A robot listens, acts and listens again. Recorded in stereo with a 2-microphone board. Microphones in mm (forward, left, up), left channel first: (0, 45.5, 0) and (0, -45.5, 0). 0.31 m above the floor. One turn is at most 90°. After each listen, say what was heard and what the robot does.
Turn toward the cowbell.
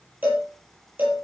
The cowbell: about 20° right or 160° right. Turn 20° right.
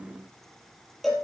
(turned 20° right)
Facing the cowbell, over 4 m away.